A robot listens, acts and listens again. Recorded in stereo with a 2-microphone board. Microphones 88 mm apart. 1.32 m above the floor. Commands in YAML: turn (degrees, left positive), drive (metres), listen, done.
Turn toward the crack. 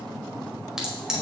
turn: -30
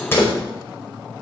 turn: 25
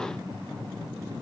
done: "Facing where the crack came from. I can't hear it now."